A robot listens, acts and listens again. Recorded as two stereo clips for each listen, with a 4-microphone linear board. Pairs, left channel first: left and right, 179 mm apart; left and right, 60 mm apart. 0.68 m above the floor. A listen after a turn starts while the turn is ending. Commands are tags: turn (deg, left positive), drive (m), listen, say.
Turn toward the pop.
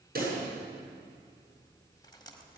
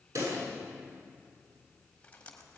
<turn deg="-60"/>
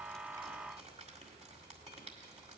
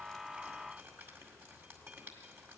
<listen/>
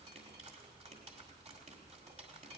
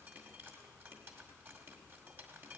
<say>I heard a pop, but can't make it out now. It was about straight ahead or 60° right.</say>